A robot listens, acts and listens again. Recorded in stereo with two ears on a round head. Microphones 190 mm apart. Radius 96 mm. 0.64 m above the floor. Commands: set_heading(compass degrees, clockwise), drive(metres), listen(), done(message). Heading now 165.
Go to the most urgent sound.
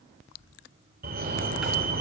set_heading(205)
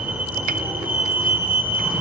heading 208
drive(1.0)
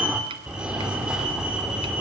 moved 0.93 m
drive(1.0)
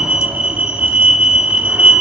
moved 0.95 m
drive(1.0)
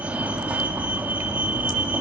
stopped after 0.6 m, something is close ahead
set_heading(218)
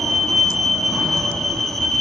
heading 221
done("I am next to the fire alarm.")